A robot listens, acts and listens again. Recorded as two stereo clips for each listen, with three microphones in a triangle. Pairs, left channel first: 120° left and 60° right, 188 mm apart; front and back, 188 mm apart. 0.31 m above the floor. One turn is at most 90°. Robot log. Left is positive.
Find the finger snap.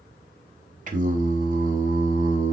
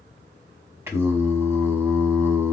cmd idle
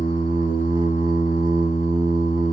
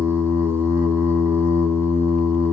cmd idle
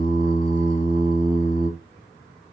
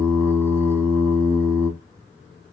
end: I can't make out a finger snap, only singing.